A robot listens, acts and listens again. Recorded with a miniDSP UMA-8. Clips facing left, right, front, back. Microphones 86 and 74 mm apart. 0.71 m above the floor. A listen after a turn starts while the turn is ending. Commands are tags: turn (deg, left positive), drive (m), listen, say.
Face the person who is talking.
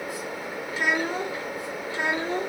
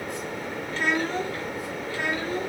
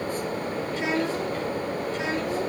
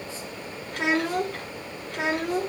<turn deg="155"/>
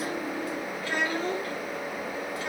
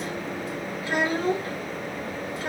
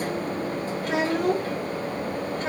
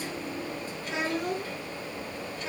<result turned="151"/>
<turn deg="-35"/>
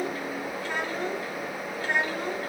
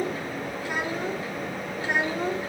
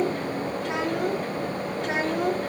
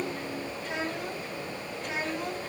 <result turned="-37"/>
<turn deg="-15"/>
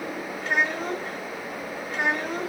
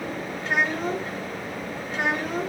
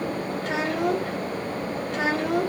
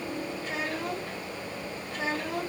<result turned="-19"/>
<say>Facing the child speaking, 2 to 4 m away.</say>